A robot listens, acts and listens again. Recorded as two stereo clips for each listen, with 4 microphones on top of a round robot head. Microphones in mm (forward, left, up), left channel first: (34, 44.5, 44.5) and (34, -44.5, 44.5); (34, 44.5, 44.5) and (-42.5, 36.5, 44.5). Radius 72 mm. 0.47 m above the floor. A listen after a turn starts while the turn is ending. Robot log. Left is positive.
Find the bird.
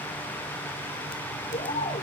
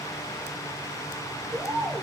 note: The bird: 125° left.
cmd yaw +125
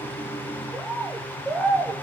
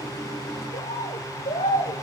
end: Found it: a bird, straight ahead, over 4 m away.